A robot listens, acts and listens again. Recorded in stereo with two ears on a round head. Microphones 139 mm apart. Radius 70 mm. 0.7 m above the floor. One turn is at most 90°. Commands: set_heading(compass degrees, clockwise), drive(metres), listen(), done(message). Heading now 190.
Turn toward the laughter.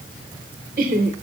set_heading(245)
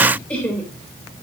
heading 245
set_heading(235)
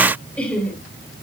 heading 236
set_heading(226)
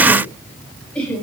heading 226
set_heading(216)
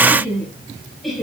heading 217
done("Facing the laughter, over 4 m away.")